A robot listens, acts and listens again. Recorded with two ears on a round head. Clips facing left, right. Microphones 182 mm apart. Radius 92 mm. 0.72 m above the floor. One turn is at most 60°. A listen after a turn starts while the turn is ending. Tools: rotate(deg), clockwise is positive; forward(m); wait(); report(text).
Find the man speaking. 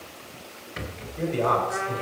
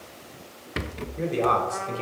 rotate(35)
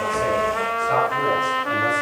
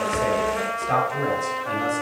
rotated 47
rotate(60)
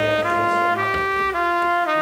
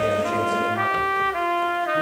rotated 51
rotate(50)
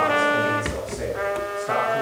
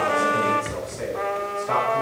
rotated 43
report("Found it: a man speaking, straight ahead.")